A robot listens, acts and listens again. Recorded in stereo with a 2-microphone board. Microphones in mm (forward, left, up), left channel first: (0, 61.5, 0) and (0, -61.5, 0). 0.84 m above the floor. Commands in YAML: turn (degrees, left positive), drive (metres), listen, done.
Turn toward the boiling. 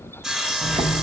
turn: -60
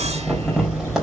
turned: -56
done: "Facing the boiling, over 4 m away."